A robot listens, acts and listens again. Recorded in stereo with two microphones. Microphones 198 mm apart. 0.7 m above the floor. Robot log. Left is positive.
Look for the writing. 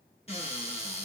cmd idle
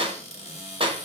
cmd idle
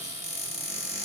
end: I can't make out writing to turn to.